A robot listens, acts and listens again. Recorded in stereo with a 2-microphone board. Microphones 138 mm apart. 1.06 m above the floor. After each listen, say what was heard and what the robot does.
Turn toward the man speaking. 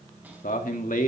The man speaking: about 75° left or 105° left. Turn 75° left.
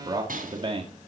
So it is at 40° right. Turn 40° right.
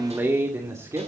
The man speaking is now 25° right. Turn 25° right.
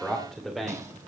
Found it: a man speaking, straight ahead.